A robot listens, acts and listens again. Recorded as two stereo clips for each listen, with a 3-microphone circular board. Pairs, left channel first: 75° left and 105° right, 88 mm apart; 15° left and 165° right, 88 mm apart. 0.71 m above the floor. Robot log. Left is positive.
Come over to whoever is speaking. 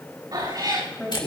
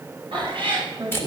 note: The man speaking: 150° left.
cmd yaw +150
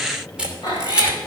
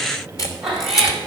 cmd idle
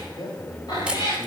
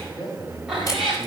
note: The man speaking is now 50° left.
cmd yaw +50
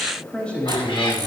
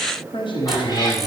cmd fwd 1.0
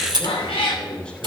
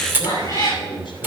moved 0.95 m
cmd fwd 1.0
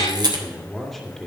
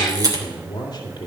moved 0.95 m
note: The man speaking is now 10° right.
cmd yaw -10
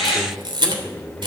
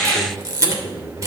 cmd fwd 1.0
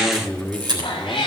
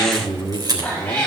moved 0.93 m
cmd fwd 1.0
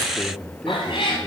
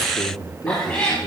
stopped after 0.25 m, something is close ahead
end: I am next to the man speaking.